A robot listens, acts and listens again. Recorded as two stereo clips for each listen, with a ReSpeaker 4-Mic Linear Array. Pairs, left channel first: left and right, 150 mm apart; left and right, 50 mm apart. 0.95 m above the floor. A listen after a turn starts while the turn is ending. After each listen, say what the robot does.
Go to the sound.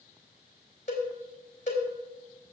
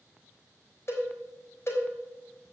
Turn 50° left.
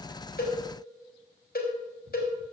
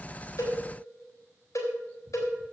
Turn 80° left.
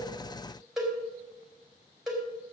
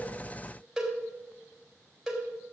Drive 1.0 m forward.
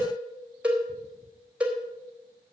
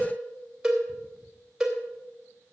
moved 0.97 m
Turn 10° right.
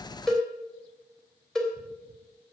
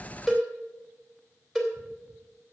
Drive 1.0 m forward.
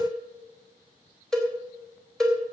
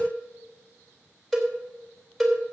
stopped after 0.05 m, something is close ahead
Blocked. The cowbell is further on, straight ahead.